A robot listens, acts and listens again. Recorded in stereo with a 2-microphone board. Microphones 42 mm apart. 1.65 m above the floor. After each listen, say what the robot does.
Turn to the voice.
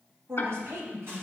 Turn 75° right.
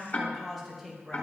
Found it: a woman speaking, straight ahead, 1 to 2 m away.